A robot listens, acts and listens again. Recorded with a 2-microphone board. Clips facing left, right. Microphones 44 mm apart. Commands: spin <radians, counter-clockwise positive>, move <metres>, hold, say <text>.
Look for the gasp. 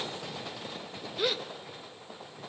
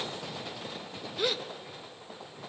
spin 0.52
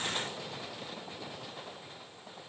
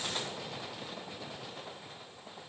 hold
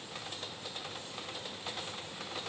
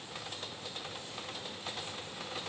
say I heard a gasp, but can't make it out now. It was about 30° right or 150° left.